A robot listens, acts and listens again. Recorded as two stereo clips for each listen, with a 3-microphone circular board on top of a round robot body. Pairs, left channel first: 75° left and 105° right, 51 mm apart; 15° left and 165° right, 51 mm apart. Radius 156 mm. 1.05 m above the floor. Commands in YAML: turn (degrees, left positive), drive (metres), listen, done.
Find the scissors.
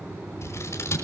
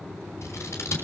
turn: 45
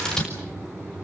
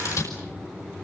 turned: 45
done: "Found it: scissors, straight ahead, over 4 m away."